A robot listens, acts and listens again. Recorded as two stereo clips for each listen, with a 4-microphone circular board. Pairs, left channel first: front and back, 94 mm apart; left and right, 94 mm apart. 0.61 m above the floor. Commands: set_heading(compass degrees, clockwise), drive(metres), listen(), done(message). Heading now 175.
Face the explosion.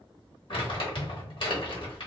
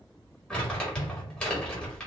set_heading(50)
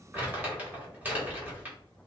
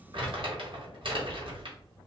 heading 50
done("I heard an explosion from this way, but can't make it out now.")